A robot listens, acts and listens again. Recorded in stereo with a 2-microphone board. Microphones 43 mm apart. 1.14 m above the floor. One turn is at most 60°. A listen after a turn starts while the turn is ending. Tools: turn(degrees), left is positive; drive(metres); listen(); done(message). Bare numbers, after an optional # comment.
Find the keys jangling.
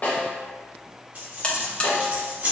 # The keys jangling: about 50° right or 130° right.
turn(-50)
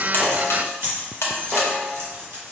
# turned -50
# So it is at 80° right.
turn(-60)
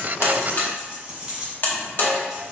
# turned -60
# The keys jangling is now 25° right.
turn(-25)
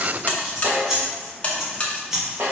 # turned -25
# The keys jangling is now 10° right.
turn(-10)
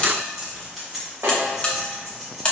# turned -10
done("Found it: keys jangling, straight ahead, 1 to 2 m away.")